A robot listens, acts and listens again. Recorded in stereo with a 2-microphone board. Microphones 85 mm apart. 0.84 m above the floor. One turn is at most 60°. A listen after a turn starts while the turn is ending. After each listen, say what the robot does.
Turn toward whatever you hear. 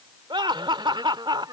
Turn 60° right.
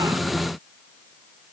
Keep listening.
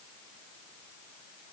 Keep listening.
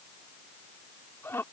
Turn 30° left.
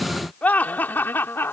Turn 25° left.
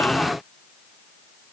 Keep listening.
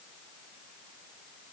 Keep listening.
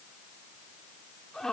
Found it: laughter, straight ahead.